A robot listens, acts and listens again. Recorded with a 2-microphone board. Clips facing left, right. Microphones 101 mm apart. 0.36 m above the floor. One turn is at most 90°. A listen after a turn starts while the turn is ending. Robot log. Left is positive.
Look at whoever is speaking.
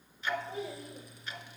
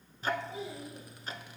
note: The child speaking: about 55° left or 125° left.
cmd yaw +55
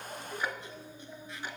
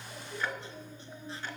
end: Found it: a child speaking, straight ahead, over 4 m away.